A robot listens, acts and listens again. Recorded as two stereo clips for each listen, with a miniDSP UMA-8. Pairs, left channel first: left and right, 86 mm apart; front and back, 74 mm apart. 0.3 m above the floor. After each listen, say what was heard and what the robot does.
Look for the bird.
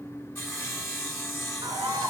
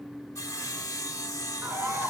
The bird: 125° right. Turn 125° right.
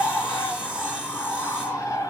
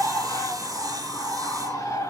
The bird is now 30° left. Turn 30° left.
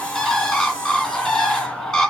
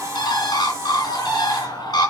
Found it: a bird, straight ahead, 2 to 4 m away.